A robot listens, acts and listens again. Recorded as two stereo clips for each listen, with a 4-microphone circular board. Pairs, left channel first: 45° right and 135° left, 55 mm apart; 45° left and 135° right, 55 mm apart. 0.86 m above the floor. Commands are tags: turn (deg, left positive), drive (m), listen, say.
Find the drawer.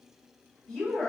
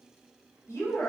<listen/>
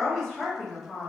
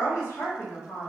<listen/>
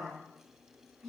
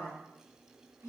<say>I can't make out a drawer to turn to.</say>